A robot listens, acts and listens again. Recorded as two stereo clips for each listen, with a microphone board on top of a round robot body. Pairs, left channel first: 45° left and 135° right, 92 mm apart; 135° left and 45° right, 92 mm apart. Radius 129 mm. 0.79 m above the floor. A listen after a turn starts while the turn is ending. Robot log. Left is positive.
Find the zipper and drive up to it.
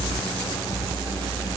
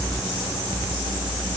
cmd idle
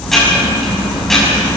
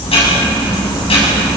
cmd idle
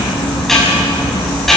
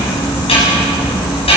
end: I can't make out a zipper to turn to.